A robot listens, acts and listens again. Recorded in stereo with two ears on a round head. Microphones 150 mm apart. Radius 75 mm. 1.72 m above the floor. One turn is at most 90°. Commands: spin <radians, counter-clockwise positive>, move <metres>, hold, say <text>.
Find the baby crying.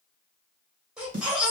spin -0.52
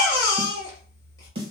spin 0.44
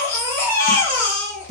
spin 0.26
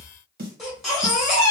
say Found it: a baby crying, straight ahead, 1 to 2 m away.